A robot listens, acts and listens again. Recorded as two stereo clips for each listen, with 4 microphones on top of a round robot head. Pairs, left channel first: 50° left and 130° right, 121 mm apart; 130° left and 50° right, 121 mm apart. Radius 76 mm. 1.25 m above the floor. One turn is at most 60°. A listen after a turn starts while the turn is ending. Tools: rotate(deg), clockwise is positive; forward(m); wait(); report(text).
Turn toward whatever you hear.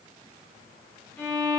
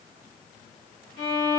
rotate(-60)
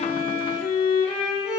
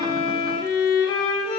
rotate(-60)
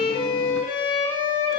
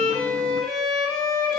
rotate(-50)
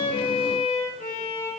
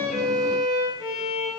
report("Facing the violin, 2 to 4 m away.")